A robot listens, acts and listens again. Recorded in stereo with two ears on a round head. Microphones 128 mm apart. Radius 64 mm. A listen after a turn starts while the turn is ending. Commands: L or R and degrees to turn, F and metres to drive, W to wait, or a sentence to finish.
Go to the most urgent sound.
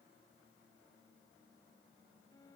W
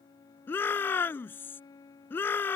L30
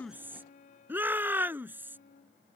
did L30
R15
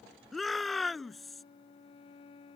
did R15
F1.0
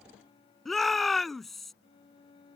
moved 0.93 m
F1.0
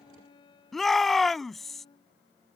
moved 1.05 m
F1.0
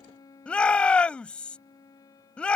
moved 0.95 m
L10
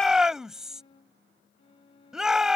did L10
F1.0
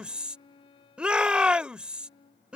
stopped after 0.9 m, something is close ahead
R10
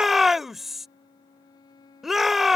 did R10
I am next to the shout.